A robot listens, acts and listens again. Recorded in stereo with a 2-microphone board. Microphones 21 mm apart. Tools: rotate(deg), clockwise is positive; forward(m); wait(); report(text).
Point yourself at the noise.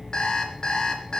rotate(-40)
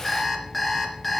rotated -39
report("Found it: an alarm clock, straight ahead, 2 to 4 m away.")